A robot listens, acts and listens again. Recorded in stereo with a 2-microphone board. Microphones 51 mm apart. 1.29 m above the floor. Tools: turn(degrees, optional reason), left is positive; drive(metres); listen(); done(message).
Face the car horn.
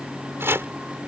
listen()
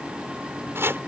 listen()
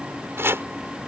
done("I can't make out a car horn, only chopping.")